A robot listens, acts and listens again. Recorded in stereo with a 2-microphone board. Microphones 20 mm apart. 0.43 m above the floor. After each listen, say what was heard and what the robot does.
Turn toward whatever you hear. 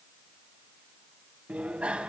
The bicycle bell: about 75° right or 105° right. Turn 75° right.
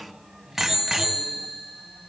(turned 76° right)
So it is at 10° right. Turn 10° right.
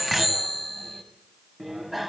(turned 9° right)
Facing the bicycle bell.